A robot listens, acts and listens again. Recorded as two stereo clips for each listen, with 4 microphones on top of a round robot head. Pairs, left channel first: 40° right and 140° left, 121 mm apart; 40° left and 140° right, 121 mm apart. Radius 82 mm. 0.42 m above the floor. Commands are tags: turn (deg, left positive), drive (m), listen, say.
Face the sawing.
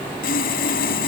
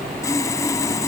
<turn deg="-30"/>
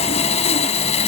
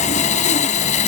<say>Facing the sawing.</say>